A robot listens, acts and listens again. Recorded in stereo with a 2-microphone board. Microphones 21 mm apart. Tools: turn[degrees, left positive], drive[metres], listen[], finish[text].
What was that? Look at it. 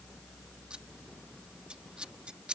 Thought: The scissors: about 50° right or 130° right.
Action: turn[-50]
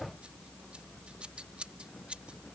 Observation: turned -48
Thought: So it is at 75° right.
Action: turn[-75]
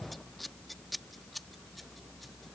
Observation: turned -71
Action: finish[Facing the scissors.]